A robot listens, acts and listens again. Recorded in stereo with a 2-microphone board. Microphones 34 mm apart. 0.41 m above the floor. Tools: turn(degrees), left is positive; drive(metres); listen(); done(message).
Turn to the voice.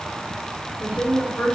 turn(degrees=45)
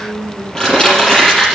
turn(degrees=80)
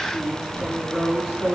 turn(degrees=50)
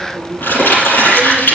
listen()
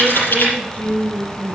turn(degrees=25)
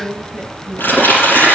turn(degrees=15)
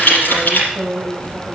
done("Facing the woman speaking, over 4 m away.")